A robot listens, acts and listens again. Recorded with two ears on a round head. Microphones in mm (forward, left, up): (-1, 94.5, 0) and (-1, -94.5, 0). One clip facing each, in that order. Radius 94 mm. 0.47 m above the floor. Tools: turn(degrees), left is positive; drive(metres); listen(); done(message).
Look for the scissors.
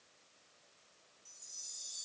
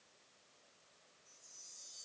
listen()
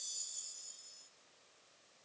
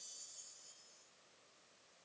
listen()
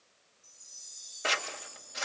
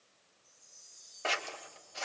turn(degrees=20)
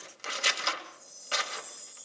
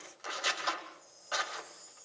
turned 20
turn(degrees=140)
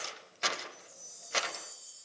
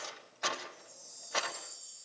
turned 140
turn(degrees=35)
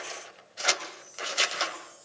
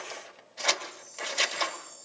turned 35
turn(degrees=10)
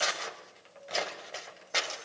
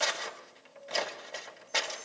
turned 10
done("Found it: scissors, straight ahead, 2 to 4 m away.")